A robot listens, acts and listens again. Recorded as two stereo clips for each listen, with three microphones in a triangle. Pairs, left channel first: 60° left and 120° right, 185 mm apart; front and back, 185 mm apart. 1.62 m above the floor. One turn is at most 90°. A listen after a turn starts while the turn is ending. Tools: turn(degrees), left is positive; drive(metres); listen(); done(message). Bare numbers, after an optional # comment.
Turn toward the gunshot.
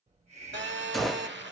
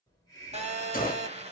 # The gunshot: 30° right.
turn(-30)
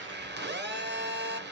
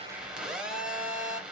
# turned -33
done("I heard a gunshot from this way, but can't make it out now.")